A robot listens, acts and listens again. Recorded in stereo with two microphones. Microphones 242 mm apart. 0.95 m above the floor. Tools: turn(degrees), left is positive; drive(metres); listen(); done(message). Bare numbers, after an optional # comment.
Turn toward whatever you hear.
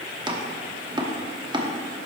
# The chopping: about 20° right or 160° right.
turn(-20)
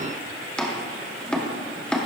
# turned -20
done("Facing the chopping, 1 to 2 m away.")